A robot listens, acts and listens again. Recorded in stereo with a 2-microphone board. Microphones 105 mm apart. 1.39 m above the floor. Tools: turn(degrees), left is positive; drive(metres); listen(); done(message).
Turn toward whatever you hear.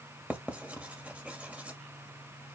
turn(degrees=-30)
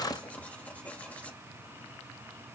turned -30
turn(degrees=15)
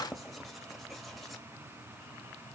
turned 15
done("Facing the writing, 1 to 2 m away.")